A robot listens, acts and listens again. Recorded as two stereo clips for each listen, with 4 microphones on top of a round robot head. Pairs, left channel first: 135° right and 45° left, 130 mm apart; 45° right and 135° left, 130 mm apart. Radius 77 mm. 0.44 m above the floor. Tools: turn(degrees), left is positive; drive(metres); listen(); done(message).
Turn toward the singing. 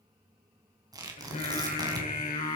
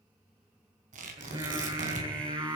turn(degrees=-170)
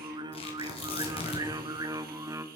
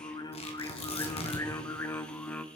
turn(degrees=20)
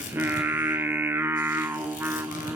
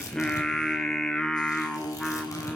turn(degrees=30)
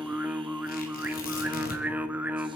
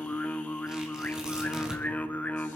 done("Found it: singing, straight ahead.")